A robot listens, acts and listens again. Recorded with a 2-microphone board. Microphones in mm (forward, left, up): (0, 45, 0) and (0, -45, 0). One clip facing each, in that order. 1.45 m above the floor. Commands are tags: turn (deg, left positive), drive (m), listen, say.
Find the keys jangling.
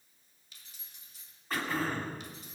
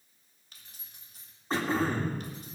<turn deg="-50"/>
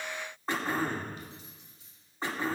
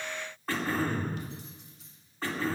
<turn deg="-80"/>
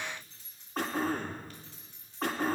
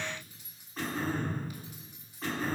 <turn deg="-10"/>
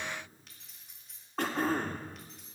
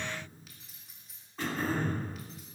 <say>Facing the keys jangling, 2 to 4 m away.</say>